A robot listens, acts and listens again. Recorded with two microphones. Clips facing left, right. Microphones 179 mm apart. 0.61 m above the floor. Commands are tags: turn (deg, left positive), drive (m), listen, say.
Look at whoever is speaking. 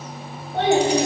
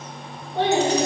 <turn deg="90"/>
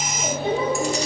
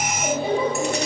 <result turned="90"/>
<turn deg="-10"/>
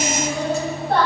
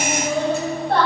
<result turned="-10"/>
<say>Found it: a child speaking, straight ahead.</say>